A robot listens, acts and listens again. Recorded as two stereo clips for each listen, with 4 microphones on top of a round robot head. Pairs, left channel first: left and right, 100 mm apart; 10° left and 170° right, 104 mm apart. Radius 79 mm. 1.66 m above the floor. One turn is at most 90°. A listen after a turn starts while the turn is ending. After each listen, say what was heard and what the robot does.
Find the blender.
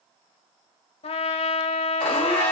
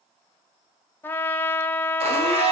The blender: 175° left. Turn 90° left.
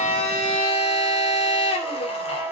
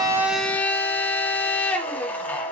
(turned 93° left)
The blender is now 80° left. Turn 80° left.
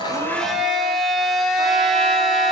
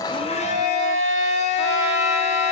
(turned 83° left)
Found it: a blender, straight ahead, 2 to 4 m away.